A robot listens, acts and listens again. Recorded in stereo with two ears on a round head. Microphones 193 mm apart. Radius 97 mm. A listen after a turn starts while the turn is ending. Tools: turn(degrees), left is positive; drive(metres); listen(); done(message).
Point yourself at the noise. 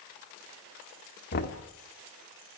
turn(degrees=50)
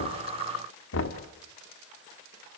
turn(degrees=70)
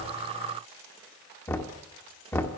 turn(degrees=10)
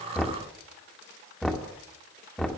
done("Facing the knocking, 1 to 2 m away.")